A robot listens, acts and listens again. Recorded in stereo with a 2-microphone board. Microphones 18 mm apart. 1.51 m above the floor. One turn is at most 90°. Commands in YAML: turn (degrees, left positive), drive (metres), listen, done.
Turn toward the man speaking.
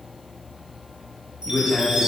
turn: 65
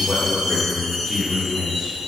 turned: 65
turn: 20
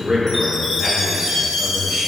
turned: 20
done: "Found it: a man speaking, straight ahead, 1 to 2 m away."